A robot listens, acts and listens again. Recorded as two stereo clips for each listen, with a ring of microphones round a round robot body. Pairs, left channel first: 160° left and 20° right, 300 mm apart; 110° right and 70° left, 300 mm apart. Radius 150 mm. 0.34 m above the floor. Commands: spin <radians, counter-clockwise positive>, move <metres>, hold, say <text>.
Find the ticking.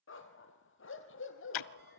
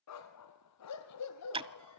spin 2.44
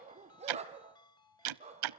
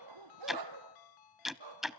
spin -0.35
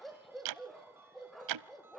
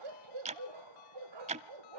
say Found it: ticking, straight ahead.